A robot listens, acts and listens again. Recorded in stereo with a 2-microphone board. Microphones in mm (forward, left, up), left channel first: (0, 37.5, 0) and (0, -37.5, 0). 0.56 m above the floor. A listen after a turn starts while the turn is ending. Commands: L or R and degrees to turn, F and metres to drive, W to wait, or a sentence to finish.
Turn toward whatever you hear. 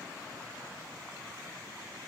W
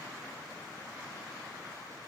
W
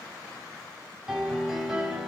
R30
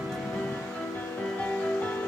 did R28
L20
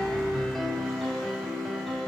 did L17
Facing the piano, 2 to 4 m away.